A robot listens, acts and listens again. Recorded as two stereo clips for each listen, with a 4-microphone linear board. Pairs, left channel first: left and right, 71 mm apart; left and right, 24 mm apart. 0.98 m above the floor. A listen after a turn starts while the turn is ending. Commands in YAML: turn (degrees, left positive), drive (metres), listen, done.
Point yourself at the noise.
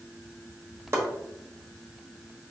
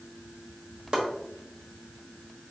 turn: -40
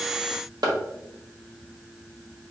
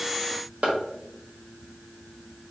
turn: -95
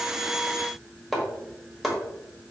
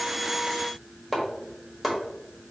done: "Found it: chopping, straight ahead."